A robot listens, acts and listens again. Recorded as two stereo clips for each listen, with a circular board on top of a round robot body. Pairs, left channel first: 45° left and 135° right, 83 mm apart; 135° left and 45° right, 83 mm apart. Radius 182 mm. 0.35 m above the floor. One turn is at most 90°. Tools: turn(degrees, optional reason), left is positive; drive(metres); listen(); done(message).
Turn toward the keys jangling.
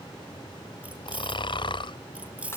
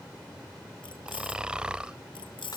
turn(degrees=90, reason="The keys jangling: 150° left.")
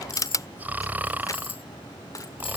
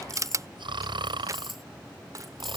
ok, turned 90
turn(degrees=45, reason="The keys jangling is now 45° left.")
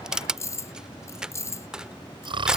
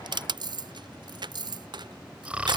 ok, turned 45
turn(degrees=-10, reason="The keys jangling is now 10° right.")
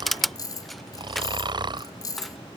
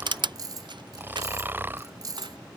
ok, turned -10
done("Facing the keys jangling.")